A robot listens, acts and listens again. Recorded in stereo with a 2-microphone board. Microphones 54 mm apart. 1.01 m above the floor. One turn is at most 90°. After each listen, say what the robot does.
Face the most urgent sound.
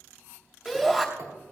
Turn 30° right.
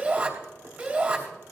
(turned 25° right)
Turn 90° right.
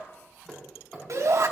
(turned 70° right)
Turn 80° right.
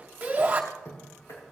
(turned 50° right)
Turn 30° right.
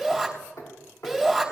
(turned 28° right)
Facing the shout, 2 to 4 m away.